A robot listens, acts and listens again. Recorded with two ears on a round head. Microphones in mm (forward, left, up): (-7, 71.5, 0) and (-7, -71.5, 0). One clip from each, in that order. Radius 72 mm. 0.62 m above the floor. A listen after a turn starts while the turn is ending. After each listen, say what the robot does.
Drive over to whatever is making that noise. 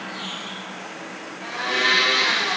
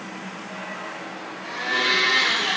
Turn 30° left.
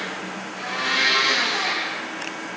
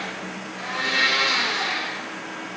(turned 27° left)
Drive 1.0 m forward.
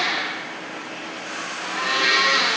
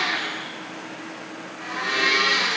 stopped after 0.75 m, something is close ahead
Arrived at the blender, straight ahead.